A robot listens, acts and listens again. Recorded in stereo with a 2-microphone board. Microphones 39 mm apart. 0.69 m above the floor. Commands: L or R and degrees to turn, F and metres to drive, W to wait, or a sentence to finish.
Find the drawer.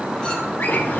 L65
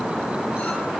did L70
W
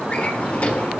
L40
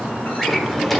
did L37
Facing the drawer, 1 to 2 m away.